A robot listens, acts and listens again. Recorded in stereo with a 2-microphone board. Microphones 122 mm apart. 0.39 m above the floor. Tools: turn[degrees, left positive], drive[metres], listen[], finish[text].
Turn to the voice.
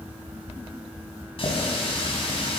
Action: listen[]
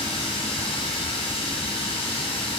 Action: listen[]
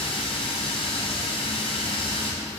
Action: finish[I can't make out anyone speaking, only a running tap.]